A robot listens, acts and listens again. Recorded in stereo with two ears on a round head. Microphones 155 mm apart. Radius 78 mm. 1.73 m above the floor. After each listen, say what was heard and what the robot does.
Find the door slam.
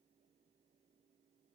Keep listening.
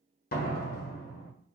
The door slam: about 50° left or 130° left. Turn 50° left.
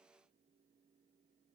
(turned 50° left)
Keep listening.
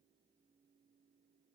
I heard a door slam, but can't make it out now. It was about straight ahead or 80° left.